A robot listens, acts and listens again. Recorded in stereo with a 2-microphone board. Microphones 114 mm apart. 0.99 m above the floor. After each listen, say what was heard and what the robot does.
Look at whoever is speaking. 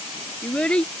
Turn 30° left.
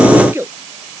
So it is at 20° right. Turn 20° right.
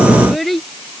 Facing the child speaking.